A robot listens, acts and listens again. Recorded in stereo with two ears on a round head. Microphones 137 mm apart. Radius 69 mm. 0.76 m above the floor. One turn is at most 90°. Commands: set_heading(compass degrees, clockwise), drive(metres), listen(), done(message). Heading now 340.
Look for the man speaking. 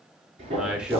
set_heading(10)
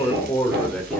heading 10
set_heading(340)
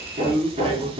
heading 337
set_heading(17)
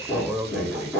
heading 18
done("Found it: a man speaking, straight ahead.")